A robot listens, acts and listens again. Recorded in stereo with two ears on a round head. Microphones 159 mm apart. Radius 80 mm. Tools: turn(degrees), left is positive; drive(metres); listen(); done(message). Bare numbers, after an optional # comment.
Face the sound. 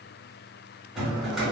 turn(-30)
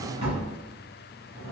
# So it is at 145° right.
turn(-145)
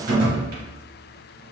# The drawer is now 55° right.
turn(-55)
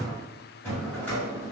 # The drawer is now 10° left.
turn(10)
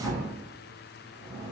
done("Found it: a drawer, straight ahead.")